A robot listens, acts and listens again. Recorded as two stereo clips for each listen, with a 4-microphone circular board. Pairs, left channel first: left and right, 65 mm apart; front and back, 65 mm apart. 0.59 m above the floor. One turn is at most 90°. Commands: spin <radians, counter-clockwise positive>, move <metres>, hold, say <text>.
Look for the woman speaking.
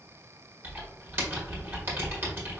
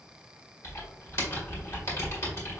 hold
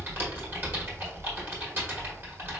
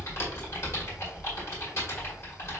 hold
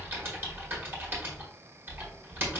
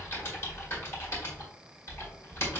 say I can't make out a woman speaking, only typing on a keyboard.